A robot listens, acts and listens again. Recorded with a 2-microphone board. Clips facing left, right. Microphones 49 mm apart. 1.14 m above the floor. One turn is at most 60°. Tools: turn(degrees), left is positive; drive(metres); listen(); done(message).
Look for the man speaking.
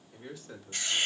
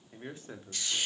turn(degrees=-30)
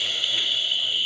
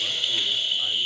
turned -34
listen()
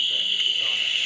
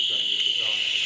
listen()
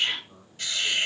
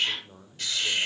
turn(degrees=-60)
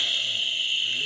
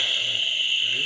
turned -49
turn(degrees=-60)
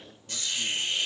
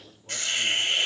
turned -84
listen()
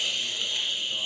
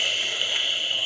done("Facing where the man speaking came from. I can't hear it now.")